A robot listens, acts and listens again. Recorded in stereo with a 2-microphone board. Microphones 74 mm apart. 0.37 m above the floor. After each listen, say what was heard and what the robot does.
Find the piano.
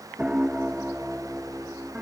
The piano: about 20° right or 160° right. Turn 20° right.
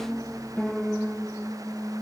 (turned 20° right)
Found it: a piano, straight ahead.